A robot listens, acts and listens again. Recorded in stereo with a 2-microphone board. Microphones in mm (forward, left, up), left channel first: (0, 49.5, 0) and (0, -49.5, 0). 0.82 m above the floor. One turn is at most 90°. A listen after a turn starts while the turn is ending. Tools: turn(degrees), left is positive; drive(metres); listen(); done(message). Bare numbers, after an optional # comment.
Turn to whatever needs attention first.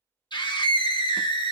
# The scream: about 45° left or 135° left.
turn(45)
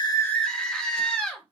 # So it is at 10° left.
turn(10)
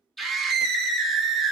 done("Found it: a scream, straight ahead, under 1 m away.")